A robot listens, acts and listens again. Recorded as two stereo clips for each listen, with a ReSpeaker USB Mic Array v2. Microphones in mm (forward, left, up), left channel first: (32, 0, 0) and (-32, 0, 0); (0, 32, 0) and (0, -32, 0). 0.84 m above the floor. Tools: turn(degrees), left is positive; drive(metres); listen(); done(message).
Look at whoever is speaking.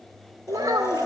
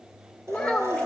turn(degrees=165)
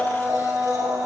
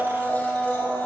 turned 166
listen()
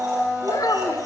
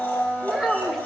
done("Found it: a child speaking, straight ahead, 2 to 4 m away.")